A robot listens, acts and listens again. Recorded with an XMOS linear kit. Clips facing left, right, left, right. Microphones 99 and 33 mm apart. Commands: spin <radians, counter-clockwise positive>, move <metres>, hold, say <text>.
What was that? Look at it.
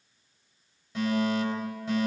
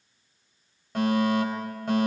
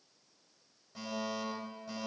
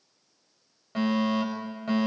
spin -1.05
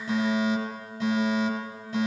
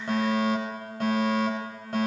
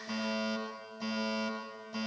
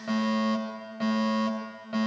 spin -1.05
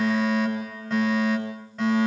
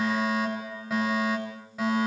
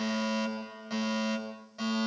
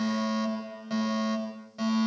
say Facing the fire alarm, over 4 m away.